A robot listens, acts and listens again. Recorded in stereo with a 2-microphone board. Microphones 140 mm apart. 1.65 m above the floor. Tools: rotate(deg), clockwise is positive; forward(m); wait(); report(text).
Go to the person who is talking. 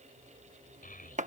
rotate(-90)
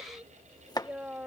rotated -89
rotate(10)
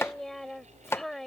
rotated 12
forward(1.0)
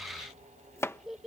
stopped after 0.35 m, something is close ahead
report("Something is in my way. I am facing the child speaking but have not reached it.")